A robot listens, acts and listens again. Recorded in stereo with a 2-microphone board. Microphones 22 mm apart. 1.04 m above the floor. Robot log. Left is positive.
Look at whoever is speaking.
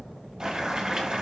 cmd idle
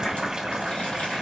cmd idle
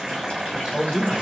note: The man speaking: about 60° left or 120° left.
cmd yaw +60
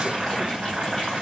cmd idle
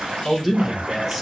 end: Found it: a man speaking, straight ahead.